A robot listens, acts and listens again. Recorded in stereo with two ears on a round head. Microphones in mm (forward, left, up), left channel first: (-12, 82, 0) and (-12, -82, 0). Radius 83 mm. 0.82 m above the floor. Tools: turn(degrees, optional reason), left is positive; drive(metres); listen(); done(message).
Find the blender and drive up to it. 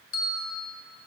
listen()
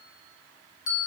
listen()
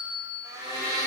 turn(degrees=-20, reason="The blender: about 20° right or 160° right.")
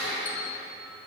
drive(metres=1.0)
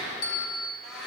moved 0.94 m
drive(metres=1.0)
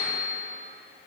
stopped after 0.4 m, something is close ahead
listen()
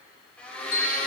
done("I am next to the blender.")